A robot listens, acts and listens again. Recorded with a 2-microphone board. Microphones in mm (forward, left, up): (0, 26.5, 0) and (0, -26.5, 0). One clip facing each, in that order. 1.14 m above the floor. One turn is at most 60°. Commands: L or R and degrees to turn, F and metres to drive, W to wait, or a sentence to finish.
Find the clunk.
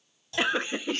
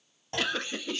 R45
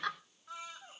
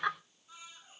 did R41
W
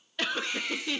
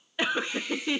I heard a clunk, but can't make it out now. It was about 5° right or 90° right.